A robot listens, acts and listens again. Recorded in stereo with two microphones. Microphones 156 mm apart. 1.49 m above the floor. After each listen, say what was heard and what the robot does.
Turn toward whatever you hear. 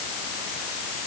Keep listening.
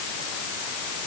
Keep listening.
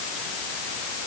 I can't make out anything to turn to.